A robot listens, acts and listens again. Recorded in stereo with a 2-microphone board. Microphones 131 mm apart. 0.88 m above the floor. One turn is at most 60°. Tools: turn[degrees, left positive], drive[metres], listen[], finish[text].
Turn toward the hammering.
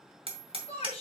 Thought: The hammering: about 45° right or 135° right.
Action: turn[-45]
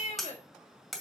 Action: finish[Found it: hammering, straight ahead, 1 to 2 m away.]